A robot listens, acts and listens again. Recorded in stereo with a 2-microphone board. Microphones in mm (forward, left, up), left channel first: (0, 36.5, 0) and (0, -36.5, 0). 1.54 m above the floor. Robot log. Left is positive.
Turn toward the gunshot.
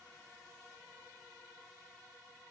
cmd idle
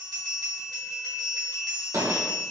note: The gunshot: about 55° right or 125° right.
cmd yaw -55
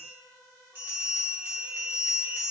cmd idle
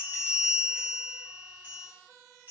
end: I heard a gunshot, but can't make it out now. It was about straight ahead or 70° right.